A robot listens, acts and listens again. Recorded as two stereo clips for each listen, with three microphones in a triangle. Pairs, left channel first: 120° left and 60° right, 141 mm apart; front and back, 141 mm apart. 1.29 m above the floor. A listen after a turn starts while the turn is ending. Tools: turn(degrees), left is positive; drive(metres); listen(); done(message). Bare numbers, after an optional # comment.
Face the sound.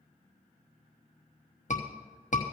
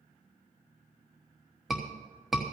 # The scream: 90° left.
turn(90)
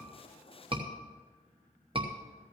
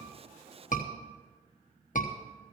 # The scream is now 10° right.
turn(-10)
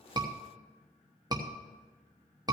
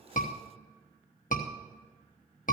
done("Facing the scream.")